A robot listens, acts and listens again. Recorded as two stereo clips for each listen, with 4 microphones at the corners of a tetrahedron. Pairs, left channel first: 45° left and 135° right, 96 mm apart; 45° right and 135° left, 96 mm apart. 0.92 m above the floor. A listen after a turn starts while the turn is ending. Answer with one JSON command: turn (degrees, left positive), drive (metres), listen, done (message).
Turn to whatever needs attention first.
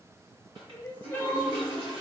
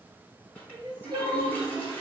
{"turn": 110}
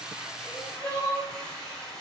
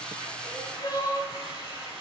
{"turn": -10}
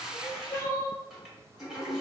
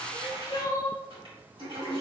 {"done": "Facing the crying, 1 to 2 m away."}